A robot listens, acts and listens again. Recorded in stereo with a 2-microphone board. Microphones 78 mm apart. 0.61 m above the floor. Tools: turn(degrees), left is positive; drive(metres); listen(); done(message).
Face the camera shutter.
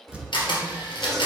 turn(degrees=90)
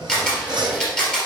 turn(degrees=10)
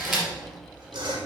done("Facing the camera shutter, 2 to 4 m away.")